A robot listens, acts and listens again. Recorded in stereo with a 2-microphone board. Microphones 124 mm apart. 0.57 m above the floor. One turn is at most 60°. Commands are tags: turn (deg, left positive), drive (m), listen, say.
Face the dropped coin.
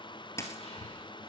<turn deg="25"/>
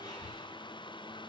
<listen/>
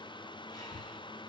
<say>I heard a dropped coin, but can't make it out now. It was about straight ahead or 130° left.</say>